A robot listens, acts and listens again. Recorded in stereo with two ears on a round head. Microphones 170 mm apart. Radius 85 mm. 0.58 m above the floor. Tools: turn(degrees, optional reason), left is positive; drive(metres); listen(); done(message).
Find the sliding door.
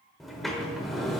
turn(degrees=30)
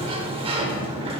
turn(degrees=-30, reason="So it is at 30° right.")
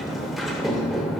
done("Facing the sliding door.")